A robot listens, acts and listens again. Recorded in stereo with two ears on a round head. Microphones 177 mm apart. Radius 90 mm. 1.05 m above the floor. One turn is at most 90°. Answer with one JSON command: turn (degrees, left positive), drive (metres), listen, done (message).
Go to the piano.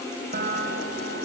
{"turn": -40}
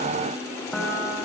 {"drive": 1.0}
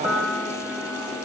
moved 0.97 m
{"drive": 1.0}
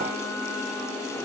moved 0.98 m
{"listen": true}
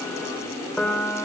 {"drive": 1.0}
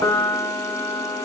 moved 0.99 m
{"turn": 15}
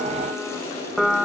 {"drive": 1.0}
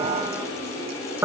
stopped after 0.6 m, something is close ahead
{"turn": -15}
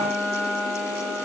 {"done": "Arrived at the piano, straight ahead."}